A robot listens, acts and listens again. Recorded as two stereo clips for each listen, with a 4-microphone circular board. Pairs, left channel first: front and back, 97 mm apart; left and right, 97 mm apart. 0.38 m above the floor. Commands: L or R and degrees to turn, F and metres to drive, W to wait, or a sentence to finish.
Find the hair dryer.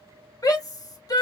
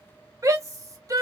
W
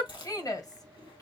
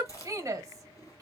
W
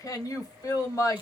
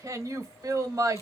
I can't make out a hair dryer, only a shout and chewing.